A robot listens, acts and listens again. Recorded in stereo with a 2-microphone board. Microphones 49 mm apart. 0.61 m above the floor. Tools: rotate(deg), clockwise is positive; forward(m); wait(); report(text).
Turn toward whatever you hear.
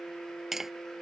rotate(30)
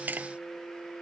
rotate(140)
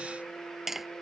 report("Found it: tapping, straight ahead.")